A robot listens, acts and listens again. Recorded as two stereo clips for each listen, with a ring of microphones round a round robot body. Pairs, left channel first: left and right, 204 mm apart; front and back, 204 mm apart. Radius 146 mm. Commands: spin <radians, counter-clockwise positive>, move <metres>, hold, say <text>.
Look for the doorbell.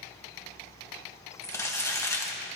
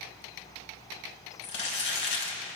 hold
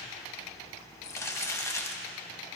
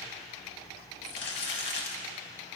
hold
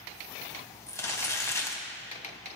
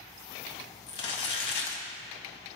say I can't make out a doorbell to turn to.